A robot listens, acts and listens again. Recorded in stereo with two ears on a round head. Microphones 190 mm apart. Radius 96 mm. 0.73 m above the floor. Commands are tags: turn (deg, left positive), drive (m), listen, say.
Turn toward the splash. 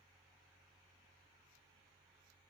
<listen/>
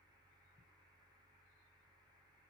<listen/>
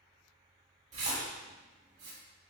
<turn deg="-35"/>
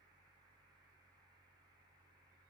<listen/>
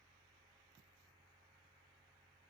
<say>I heard a splash, but can't make it out now. It was about straight ahead or 110° right.</say>